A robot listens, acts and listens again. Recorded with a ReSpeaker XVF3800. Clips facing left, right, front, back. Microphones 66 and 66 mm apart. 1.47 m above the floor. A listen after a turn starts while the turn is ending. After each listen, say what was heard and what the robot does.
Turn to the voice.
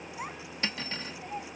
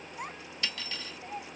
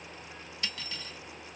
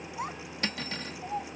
The child speaking: 175° left. Turn 175° left.
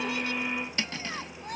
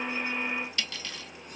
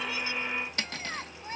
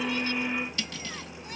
The child speaking is now 60° left. Turn 60° left.
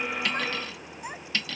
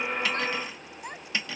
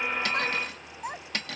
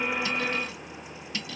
Facing the child speaking.